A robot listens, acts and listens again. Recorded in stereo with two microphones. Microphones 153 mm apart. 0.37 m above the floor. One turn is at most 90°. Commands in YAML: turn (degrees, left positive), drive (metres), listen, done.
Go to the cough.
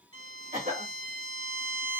turn: -60
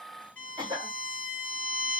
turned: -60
turn: -35
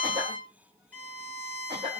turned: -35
turn: -35
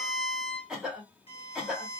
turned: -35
drive: 1.0
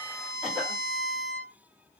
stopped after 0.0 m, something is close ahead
listen: true
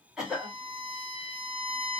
done: "Something is in my way. I am facing the cough but have not reached it."